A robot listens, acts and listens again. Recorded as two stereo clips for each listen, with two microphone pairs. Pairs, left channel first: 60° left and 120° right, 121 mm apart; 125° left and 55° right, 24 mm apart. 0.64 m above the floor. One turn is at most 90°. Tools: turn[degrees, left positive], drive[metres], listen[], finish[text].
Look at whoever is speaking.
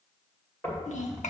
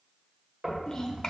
Thought: The child speaking: 65° left.
Action: turn[65]
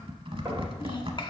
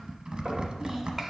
Action: listen[]
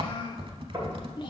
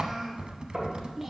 Thought: The child speaking is now 10° left.
Action: turn[10]
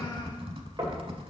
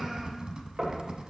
Action: listen[]
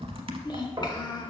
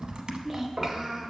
Action: finish[Found it: a child speaking, straight ahead.]